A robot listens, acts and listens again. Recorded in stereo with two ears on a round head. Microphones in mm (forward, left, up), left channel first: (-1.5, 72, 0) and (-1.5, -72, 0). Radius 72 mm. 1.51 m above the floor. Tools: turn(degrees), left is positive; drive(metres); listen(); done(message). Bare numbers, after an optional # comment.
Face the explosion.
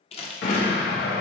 # The explosion: about 75° left or 105° left.
turn(75)
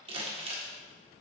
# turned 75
listen()
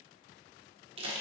done("I heard an explosion, but can't make it out now. It was about straight ahead or 30° left.")